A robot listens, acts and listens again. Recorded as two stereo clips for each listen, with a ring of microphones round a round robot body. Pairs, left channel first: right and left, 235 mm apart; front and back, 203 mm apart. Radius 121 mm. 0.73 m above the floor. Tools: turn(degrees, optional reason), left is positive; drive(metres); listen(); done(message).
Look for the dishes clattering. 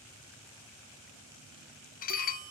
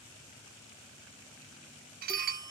turn(degrees=-140, reason="The dishes clattering: 140° right.")
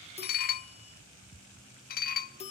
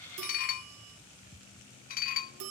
turn(degrees=-45, reason="The dishes clattering is now 45° right.")
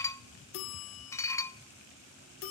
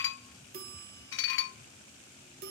turn(degrees=-15, reason="The dishes clattering is now 15° right.")
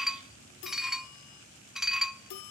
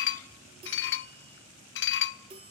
done("Facing the dishes clattering, under 1 m away.")